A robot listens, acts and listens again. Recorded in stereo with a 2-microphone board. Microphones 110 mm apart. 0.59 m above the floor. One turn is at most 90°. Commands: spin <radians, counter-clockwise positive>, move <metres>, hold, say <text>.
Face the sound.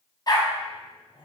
spin 0.70
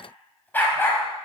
spin 0.44
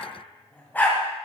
spin 0.35
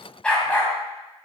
spin 0.26
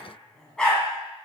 spin 0.17
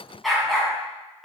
say Facing the dog barking, 2 to 4 m away.